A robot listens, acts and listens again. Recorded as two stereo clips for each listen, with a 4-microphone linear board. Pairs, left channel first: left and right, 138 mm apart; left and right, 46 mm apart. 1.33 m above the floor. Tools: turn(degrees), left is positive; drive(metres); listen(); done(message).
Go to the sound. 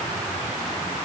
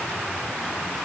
listen()
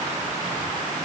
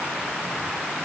listen()
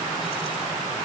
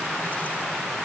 done("I can't make out anything to turn to.")